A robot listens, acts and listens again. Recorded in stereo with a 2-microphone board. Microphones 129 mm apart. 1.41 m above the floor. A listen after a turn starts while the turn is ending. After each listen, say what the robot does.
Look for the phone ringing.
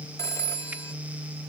Turn 25° left.
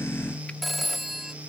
Facing the phone ringing.